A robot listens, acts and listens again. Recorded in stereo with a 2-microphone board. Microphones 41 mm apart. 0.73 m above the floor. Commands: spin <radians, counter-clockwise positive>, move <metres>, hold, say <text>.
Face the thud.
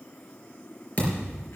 spin 0.61
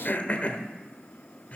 hold
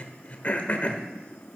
say I heard a thud, but can't make it out now. It was about straight ahead or 110° left.